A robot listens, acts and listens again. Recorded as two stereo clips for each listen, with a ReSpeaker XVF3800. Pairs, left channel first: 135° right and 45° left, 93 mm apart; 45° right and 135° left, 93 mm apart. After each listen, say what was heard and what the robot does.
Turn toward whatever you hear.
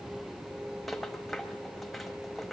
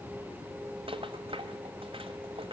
The rattle: 135° left. Turn 135° left.
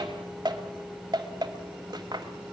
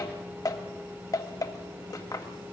Found it: a rattle, straight ahead, 1 to 2 m away.